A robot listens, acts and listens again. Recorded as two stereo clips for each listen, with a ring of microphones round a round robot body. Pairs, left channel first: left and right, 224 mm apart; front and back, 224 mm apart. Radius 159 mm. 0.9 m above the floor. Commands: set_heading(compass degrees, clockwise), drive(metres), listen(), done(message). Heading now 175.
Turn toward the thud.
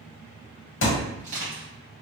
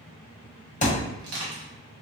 set_heading(115)
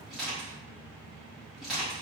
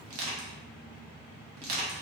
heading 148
set_heading(113)
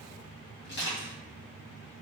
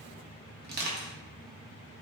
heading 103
set_heading(113)
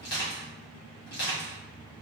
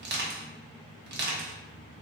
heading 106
set_heading(116)
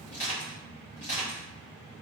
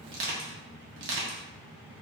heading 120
done("I heard a thud from this way, but can't make it out now.")